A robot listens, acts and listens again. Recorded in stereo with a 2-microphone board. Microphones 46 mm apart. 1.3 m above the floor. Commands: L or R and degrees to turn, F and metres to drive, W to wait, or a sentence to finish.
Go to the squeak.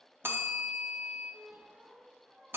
R35
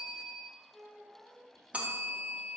F1.0
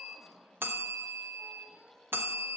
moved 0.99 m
F1.0
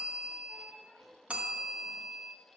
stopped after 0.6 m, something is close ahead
R10
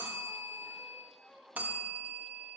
Arrived at the squeak, straight ahead.